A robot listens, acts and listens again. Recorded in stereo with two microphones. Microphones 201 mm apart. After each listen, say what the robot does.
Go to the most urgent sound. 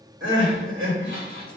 Turn 90° right.
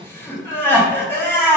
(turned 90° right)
Turn 10° left.
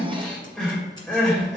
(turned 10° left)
Drive 1.0 m forward.
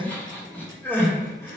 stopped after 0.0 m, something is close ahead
Turn 10° left.
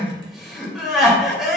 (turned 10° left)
Blocked. The crying is further on, straight ahead.